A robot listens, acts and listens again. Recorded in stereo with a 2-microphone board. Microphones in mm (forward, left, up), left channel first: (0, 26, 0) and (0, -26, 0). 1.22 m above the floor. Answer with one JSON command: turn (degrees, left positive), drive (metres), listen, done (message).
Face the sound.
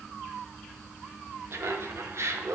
{"turn": -65}
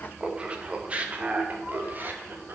{"turn": -40}
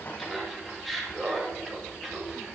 {"done": "Found it: laughter, straight ahead."}